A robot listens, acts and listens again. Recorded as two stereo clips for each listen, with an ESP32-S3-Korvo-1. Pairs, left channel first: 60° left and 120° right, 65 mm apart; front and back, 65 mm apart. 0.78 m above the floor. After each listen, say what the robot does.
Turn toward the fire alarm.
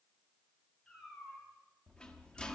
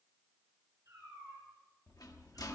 Keep listening.
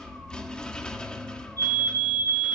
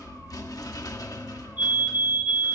Turn 120° right.
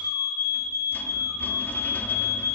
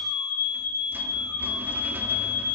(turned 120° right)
Turn 20° left.
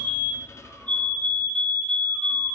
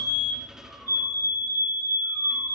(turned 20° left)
Facing the fire alarm, over 4 m away.